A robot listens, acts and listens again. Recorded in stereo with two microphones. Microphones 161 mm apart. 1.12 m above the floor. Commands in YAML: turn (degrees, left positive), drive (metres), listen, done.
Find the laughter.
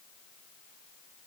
listen: true
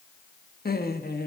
turn: 75
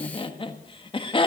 turn: 35
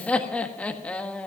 turn: 10
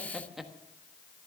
done: "Found it: laughter, straight ahead, 1 to 2 m away."